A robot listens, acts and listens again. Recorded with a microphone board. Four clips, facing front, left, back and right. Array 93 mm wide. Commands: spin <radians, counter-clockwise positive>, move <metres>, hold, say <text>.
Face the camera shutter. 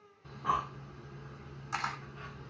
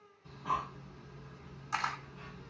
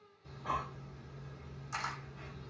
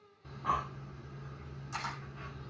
spin 1.13
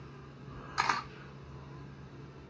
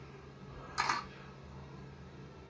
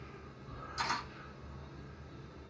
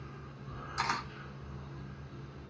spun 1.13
spin 0.17
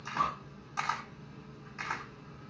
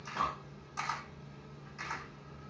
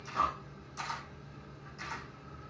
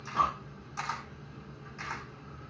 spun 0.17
say Facing the camera shutter.